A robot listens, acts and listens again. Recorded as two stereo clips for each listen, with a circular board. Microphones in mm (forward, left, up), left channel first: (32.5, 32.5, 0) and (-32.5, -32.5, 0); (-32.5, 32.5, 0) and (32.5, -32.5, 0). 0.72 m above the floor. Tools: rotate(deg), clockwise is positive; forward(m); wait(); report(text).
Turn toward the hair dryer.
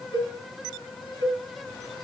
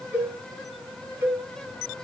wait()
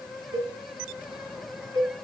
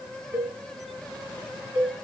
wait()
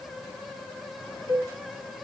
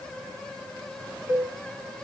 report("I can't make out a hair dryer to turn to.")